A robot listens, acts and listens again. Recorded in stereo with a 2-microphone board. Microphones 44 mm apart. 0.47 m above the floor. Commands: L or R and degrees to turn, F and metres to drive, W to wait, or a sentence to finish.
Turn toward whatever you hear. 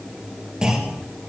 R15
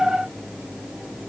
W
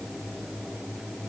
I heard a clunk, but can't make it out now. It was about straight ahead or 150° right.